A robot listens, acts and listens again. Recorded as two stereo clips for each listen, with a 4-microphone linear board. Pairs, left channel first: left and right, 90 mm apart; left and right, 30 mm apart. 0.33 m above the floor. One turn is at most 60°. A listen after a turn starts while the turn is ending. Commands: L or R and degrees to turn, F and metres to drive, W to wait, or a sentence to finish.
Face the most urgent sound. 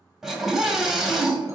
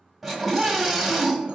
R30
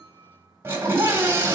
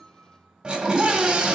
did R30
R60
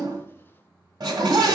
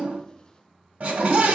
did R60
R60
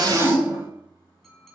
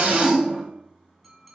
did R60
R30
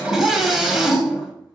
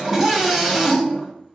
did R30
Found it: a scream, straight ahead.